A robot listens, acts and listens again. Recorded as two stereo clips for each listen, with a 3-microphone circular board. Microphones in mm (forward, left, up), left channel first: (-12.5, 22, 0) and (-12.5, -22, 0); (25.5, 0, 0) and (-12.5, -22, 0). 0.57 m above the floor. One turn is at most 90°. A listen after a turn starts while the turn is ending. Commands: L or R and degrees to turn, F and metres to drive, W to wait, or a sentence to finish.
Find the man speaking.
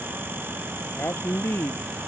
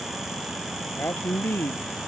L60
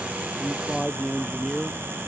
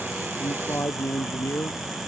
Found it: a man speaking, straight ahead.